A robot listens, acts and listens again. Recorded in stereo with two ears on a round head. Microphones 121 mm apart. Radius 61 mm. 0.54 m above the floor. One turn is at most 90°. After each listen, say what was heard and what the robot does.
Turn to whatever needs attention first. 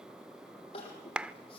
The crying: about 45° left or 135° left. Turn 45° left.
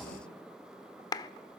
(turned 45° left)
Keep listening.
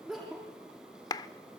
Found it: crying, straight ahead.